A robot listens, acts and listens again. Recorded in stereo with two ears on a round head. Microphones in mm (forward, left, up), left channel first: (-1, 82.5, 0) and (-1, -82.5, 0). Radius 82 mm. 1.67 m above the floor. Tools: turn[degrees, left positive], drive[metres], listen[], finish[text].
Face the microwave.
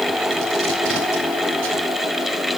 Action: listen[]
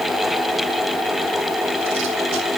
Action: listen[]
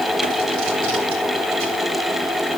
Action: finish[I can't make out a microwave.]